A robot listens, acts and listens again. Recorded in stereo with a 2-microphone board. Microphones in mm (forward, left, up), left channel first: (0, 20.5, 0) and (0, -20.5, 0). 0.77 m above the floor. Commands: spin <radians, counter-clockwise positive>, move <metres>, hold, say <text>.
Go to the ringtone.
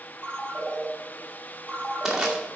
spin 0.52
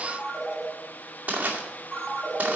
move 1.0
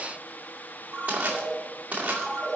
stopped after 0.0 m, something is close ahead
say Blocked. The ringtone is further on, straight ahead.